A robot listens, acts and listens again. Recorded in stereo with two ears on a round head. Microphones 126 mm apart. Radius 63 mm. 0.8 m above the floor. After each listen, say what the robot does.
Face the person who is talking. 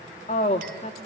Turn 50° left.
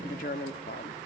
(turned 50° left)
Turn 70° left.
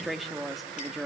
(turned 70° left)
Facing the woman speaking.